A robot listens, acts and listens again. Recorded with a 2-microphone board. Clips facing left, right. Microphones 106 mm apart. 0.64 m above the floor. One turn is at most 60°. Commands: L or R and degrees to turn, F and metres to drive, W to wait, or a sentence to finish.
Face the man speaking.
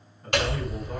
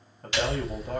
R60
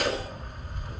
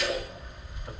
W
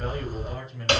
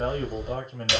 R55
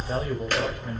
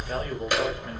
W
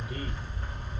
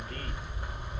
W
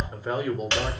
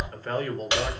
L15
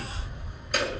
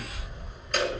W
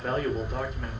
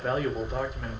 Facing the man speaking, 2 to 4 m away.